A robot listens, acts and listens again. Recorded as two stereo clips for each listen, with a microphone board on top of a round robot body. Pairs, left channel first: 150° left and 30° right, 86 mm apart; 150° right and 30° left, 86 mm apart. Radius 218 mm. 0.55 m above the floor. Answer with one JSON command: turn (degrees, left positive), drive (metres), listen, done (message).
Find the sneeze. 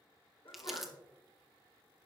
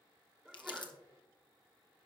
{"turn": 115}
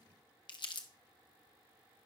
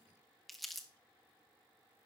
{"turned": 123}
{"turn": -10}
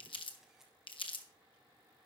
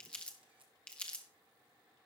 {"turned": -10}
{"done": "I heard a sneeze from this way, but can't make it out now."}